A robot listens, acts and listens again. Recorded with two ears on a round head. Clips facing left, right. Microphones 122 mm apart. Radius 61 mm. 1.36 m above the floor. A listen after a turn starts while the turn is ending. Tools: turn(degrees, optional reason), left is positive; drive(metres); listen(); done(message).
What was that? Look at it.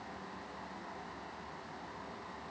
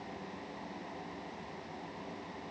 listen()
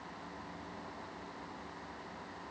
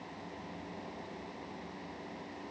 listen()
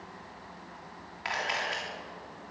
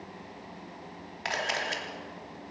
turn(degrees=-50, reason="The camera shutter: about 50° right or 130° right.")
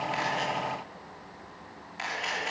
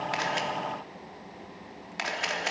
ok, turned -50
turn(degrees=-80, reason="So it is at 80° right.")
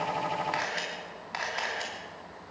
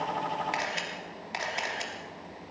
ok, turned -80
turn(degrees=-25, reason="The camera shutter is now 25° right.")
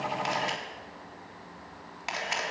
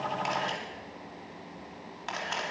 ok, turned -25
turn(degrees=10, reason="The camera shutter is now 10° left.")
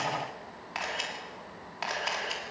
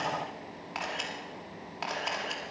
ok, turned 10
done("Facing the camera shutter, 2 to 4 m away.")